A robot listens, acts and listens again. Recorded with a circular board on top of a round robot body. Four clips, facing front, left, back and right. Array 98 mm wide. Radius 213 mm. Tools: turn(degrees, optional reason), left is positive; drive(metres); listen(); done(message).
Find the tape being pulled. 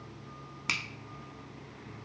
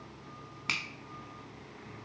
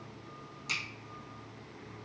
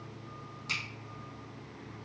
listen()
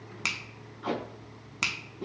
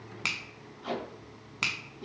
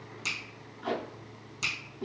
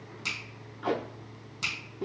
turn(degrees=-80, reason="The tape being pulled: 80° right.")
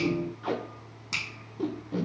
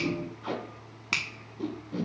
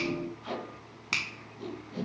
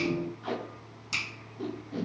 done("Found it: tape being pulled, straight ahead, under 1 m away.")